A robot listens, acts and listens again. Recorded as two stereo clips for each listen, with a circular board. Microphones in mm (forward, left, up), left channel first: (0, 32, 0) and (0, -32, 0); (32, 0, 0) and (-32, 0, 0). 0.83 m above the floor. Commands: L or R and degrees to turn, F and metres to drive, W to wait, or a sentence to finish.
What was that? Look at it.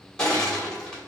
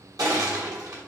L170
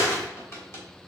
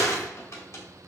L40
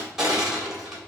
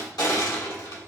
Facing the crushing.